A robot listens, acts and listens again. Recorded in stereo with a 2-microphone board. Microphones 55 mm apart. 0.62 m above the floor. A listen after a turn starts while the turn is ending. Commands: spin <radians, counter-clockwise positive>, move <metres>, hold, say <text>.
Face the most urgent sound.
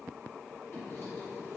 hold
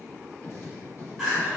spin 0.52
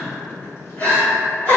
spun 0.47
spin 2.62
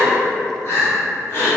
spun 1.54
spin 1.13
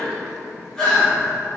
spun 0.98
spin 0.17
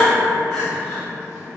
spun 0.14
say Facing the crying.